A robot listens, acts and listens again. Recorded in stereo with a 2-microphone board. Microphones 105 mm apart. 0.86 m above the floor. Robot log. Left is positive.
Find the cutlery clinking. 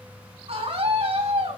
cmd idle
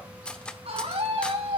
cmd yaw +30
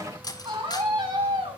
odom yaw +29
note: So it is at 140° left.
cmd yaw +140
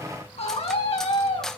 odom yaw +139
end: Found it: cutlery clinking, straight ahead, 1 to 2 m away.